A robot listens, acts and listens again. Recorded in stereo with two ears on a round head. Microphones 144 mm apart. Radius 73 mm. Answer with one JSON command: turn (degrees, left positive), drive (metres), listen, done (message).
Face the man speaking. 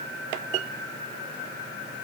{"listen": true}
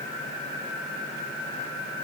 {"listen": true}
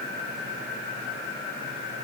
{"done": "I can't make out a man speaking."}